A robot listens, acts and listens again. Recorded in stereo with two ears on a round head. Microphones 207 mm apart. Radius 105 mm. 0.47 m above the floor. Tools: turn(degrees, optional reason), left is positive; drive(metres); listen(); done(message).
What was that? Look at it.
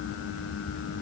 listen()
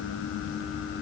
listen()
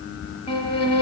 turn(degrees=25, reason="The violin: about 25° left or 155° left.")
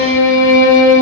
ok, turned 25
turn(degrees=130, reason="So it is at 130° left.")
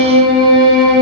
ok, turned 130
turn(degrees=-20, reason="The violin is now 20° right.")
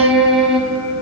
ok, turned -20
done("Found it: a violin, straight ahead, 1 to 2 m away.")